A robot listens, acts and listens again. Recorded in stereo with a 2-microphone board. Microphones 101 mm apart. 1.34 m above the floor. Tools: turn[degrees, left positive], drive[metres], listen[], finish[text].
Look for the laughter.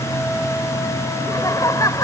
Thought: The laughter: about 35° left or 145° left.
Action: turn[35]
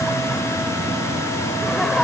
Action: listen[]
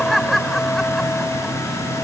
Action: finish[Found it: laughter, straight ahead.]